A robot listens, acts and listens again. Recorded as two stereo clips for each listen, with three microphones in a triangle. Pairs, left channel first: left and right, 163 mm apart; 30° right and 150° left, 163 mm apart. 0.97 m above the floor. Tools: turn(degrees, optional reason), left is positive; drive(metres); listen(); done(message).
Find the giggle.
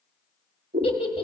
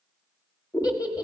turn(degrees=35, reason="The giggle: 35° left.")
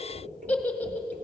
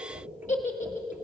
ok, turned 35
turn(degrees=10, reason="The giggle is now 10° left.")
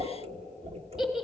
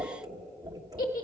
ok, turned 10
done("Facing the giggle.")